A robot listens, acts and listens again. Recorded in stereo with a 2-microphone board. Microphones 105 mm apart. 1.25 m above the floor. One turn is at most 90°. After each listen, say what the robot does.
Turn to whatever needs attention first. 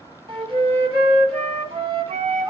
Keep listening.
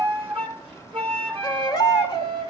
Turn 40° left.
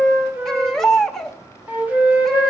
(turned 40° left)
Found it: a baby crying, straight ahead.